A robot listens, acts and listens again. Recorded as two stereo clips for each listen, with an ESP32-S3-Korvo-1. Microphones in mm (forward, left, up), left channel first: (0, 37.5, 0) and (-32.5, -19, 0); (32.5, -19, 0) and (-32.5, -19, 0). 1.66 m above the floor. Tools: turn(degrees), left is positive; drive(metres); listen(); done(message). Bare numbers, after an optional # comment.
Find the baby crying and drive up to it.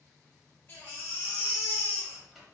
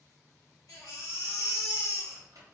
# The baby crying: 15° left.
turn(15)
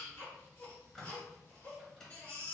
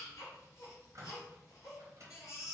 drive(1.0)
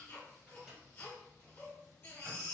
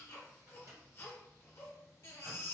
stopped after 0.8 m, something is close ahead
# The baby crying is now 15° left.
turn(15)
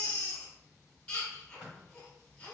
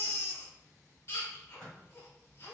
done("I am next to the baby crying.")